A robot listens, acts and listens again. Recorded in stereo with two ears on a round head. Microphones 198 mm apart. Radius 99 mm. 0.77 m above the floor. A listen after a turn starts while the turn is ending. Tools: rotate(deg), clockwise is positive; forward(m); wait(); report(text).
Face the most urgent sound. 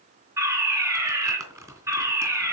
rotate(30)
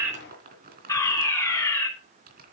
rotate(-15)
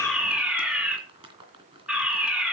report("Found it: a fire alarm, straight ahead.")